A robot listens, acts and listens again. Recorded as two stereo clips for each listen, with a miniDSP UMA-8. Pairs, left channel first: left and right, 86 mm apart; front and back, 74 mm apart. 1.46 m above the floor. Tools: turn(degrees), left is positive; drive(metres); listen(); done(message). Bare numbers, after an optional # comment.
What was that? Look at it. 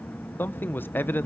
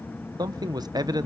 # The man speaking: 155° left.
turn(155)
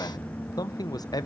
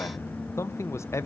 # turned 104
# The man speaking is now 50° left.
turn(50)
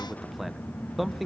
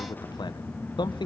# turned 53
done("Found it: a man speaking, straight ahead.")